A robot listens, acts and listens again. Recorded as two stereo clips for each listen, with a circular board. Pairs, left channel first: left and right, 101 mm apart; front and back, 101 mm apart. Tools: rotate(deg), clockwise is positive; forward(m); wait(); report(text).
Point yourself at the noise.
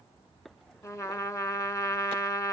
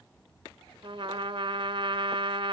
rotate(-150)
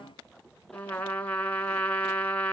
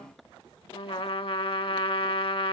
rotate(-15)
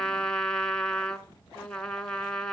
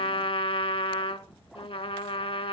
rotate(-10)
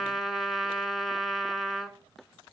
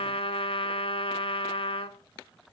report("Facing the trumpet, 1 to 2 m away.")